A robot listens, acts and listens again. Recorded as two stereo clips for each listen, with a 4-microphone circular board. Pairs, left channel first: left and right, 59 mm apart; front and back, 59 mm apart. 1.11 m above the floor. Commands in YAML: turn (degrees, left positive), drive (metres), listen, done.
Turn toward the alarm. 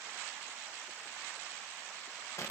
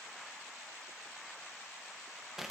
listen: true
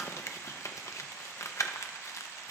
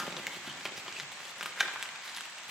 listen: true
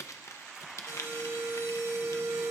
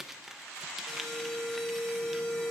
turn: -75
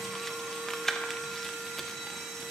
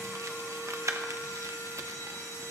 done: "Facing the alarm, over 4 m away."